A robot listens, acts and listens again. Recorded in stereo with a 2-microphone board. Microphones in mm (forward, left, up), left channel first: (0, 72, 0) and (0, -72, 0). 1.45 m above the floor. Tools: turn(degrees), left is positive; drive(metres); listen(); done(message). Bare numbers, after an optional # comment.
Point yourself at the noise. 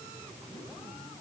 listen()
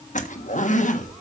# The zipper: about 65° left or 115° left.
turn(65)
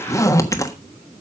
# So it is at 25° left.
turn(25)
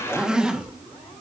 done("Facing the zipper.")